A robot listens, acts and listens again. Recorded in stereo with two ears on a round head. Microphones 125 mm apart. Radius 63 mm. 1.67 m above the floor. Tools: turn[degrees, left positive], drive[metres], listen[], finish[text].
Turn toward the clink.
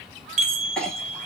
Action: turn[30]
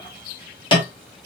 Thought: So it is at 140° left.
Action: turn[140]
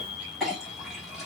Action: finish[Facing the clink.]